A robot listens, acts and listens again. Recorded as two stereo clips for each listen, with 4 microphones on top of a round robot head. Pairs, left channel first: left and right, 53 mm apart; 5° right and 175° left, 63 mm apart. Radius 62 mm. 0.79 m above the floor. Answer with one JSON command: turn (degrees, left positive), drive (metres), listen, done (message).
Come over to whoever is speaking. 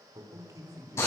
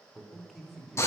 {"turn": -95}
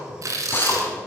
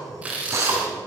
{"listen": true}
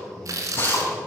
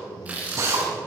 {"listen": true}
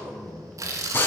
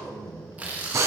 {"drive": 1.0}
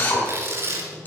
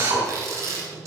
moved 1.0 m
{"listen": true}
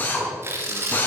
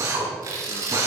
{"listen": true}
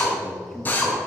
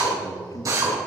{"drive": 1.0}
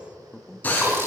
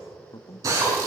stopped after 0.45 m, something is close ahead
{"turn": 10}
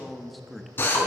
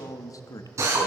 {"done": "I am next to the man speaking."}